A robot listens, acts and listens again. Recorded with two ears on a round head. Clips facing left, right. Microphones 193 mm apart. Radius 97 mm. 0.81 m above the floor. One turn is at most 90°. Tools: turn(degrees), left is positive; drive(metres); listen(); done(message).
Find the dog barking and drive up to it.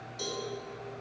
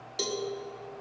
listen()
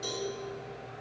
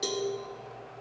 listen()
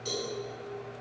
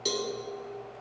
done("I can't make out a dog barking to turn to.")